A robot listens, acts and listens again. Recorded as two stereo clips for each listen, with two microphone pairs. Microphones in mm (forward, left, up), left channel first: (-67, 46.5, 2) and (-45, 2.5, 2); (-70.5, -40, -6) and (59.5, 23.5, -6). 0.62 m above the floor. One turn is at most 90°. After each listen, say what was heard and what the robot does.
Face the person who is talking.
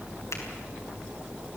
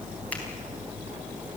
Keep listening.
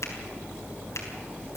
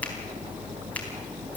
Keep listening.
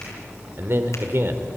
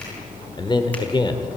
The man speaking: 100° right. Turn 90° right.
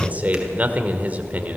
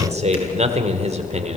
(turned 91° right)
The man speaking is now 10° right. Turn 10° right.
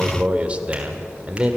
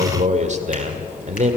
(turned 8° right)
Facing the man speaking, 1 to 2 m away.